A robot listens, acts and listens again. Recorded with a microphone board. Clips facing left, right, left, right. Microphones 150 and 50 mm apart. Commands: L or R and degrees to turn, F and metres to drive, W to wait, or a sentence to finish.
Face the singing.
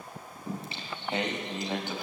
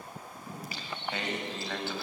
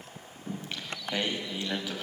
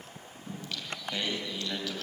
L15
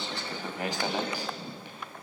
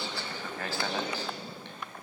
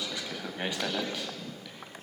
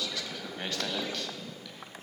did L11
L30
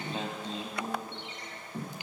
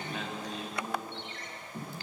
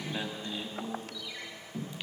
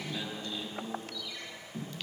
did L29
L15
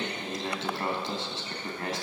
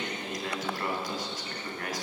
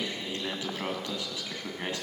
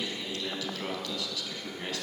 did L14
L25
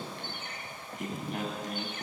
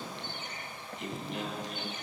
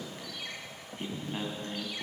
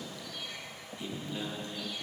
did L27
L130
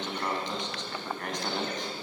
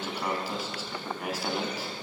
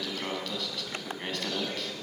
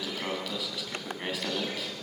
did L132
Found it: singing, straight ahead, 2 to 4 m away.